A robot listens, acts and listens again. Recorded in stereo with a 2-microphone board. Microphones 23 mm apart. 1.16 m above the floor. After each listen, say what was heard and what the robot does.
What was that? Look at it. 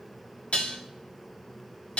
The dishes clattering: about 65° left or 115° left. Turn 65° left.
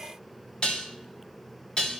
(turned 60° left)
So it is at 55° left. Turn 55° left.
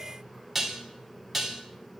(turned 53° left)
Facing the dishes clattering.